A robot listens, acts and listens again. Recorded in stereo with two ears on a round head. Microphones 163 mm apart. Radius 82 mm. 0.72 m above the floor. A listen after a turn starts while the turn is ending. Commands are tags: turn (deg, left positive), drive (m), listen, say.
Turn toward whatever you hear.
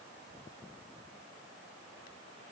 <listen/>
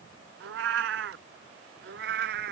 <turn deg="-60"/>
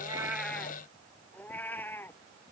<turn deg="10"/>
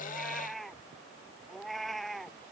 <say>Facing the cat meowing.</say>